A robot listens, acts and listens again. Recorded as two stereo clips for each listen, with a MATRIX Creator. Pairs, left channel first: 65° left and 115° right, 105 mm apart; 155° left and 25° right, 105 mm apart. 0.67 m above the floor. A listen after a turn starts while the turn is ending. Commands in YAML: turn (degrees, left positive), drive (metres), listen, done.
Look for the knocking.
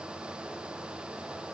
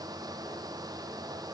listen: true
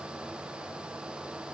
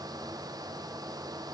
listen: true
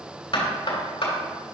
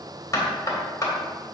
turn: 100
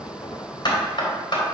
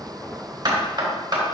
turn: 25
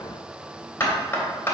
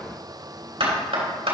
done: "Found it: knocking, straight ahead."